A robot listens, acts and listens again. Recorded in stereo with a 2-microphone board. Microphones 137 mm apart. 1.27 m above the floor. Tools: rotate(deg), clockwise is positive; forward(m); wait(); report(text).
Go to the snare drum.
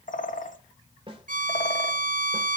rotate(40)
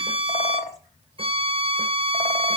wait()
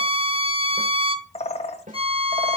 rotate(100)
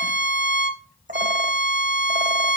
wait()
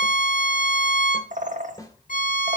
rotate(-25)
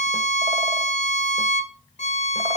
wait()
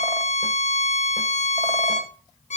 wait()
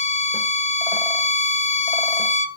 report("Facing where the snare drum came from. I can't hear it now. I did not reach it.")